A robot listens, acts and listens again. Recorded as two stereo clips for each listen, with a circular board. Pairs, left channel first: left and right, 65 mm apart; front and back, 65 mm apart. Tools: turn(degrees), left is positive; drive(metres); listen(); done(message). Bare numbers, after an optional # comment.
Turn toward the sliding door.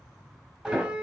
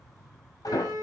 # The sliding door: 25° right.
turn(-25)
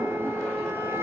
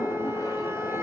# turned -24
done("Found it: a sliding door, straight ahead, over 4 m away.")